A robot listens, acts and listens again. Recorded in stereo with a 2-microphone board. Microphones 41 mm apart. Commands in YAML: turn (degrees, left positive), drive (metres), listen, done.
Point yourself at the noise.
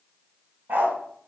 turn: -50
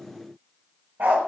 turn: -65
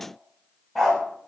turn: 10
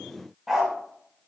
done: "Found it: a dog barking, straight ahead, under 1 m away."